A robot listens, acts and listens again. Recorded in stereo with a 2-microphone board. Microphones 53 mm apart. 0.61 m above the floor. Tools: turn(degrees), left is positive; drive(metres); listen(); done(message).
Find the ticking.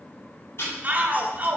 turn(degrees=55)
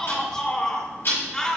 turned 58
turn(degrees=60)
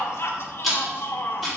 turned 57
done("Found it: ticking, straight ahead, 2 to 4 m away.")